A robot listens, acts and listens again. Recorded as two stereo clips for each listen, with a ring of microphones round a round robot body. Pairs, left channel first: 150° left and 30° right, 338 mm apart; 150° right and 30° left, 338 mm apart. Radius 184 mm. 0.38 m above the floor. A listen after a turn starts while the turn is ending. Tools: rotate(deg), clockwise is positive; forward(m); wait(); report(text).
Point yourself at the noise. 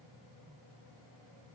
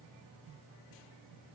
wait()
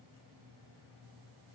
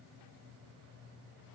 wait()
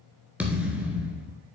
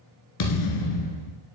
rotate(115)
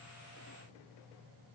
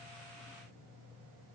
report("Facing where the thud came from. I can't hear it now.")